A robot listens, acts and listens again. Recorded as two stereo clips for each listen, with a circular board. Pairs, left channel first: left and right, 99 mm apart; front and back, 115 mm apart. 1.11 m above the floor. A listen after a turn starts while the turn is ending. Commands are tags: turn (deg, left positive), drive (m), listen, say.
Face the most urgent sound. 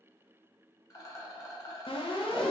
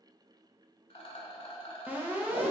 <turn deg="105"/>
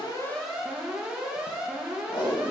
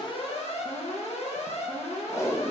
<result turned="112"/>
<say>Found it: an alarm, straight ahead.</say>